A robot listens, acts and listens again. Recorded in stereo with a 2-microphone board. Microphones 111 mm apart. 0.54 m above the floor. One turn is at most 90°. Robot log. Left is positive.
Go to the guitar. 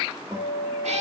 note: The guitar: about 35° right or 145° right.
cmd yaw -35
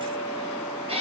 cmd fwd 1.0
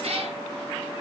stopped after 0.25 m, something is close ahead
cmd idle
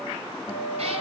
end: Something is in my way. I am facing the guitar but have not reached it.